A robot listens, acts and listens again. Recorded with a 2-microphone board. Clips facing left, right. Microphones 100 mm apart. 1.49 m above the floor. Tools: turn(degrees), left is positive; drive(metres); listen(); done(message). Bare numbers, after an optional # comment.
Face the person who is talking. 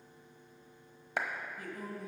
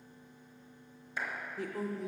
turn(-90)
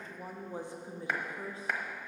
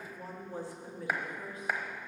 # So it is at 30° left.
turn(30)
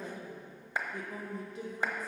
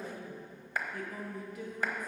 # The woman speaking is now 30° left.
turn(30)
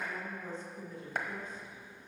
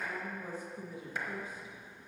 # The woman speaking is now 10° right.
turn(-10)
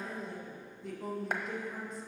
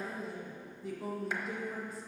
done("Found it: a woman speaking, straight ahead, 1 to 2 m away.")